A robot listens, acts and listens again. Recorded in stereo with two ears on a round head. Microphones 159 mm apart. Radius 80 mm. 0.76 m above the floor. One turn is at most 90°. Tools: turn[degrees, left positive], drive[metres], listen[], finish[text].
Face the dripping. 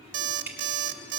Action: turn[-30]
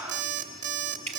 Thought: So it is at 130° right.
Action: turn[-90]
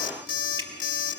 Thought: Nothing new. It was at 40° right.
Action: turn[-40]
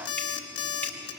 Action: listen[]
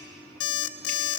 Action: finish[Facing where the dripping came from. I can't hear it now.]